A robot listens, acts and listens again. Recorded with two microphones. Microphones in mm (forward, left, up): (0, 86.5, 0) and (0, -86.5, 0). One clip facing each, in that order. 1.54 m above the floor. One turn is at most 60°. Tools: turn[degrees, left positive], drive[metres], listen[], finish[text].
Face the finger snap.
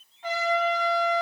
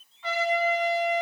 Action: listen[]
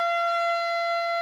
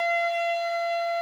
Action: listen[]
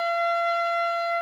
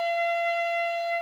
Action: finish[I can't make out a finger snap, only a trumpet.]